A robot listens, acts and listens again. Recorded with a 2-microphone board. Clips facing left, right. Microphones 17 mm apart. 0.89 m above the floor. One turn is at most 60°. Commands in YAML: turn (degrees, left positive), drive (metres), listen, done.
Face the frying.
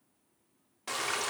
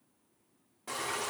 turn: 55
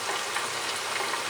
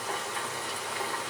turn: 60
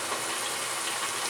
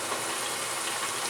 done: "Facing the frying."